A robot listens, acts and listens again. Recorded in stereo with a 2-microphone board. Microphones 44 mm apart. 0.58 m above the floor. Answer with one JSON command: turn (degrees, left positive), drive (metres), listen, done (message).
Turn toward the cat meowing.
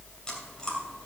{"listen": true}
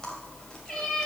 {"turn": 30}
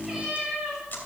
{"turn": -15}
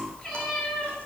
{"turn": 10}
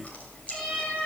{"done": "Facing the cat meowing."}